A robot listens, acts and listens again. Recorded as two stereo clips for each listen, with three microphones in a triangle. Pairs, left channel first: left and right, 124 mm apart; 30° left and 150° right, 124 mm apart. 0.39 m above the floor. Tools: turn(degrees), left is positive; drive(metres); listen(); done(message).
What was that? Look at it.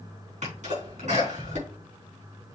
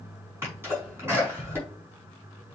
turn(degrees=-80)
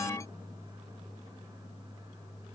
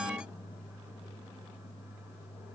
done("Facing where the sneeze came from. I can't hear it now.")